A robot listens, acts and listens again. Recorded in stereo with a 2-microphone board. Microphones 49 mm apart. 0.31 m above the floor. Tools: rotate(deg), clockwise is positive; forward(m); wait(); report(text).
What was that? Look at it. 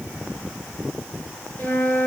rotate(-40)
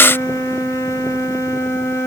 rotate(-105)
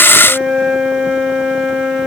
report("Found it: a flute, straight ahead.")